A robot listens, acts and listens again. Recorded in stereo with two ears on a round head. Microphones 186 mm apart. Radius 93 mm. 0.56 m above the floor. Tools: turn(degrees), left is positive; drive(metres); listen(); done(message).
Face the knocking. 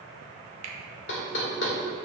turn(degrees=65)
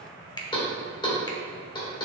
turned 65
turn(degrees=25)
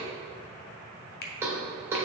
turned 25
turn(degrees=-15)
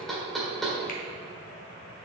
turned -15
done("Found it: knocking, straight ahead, 1 to 2 m away.")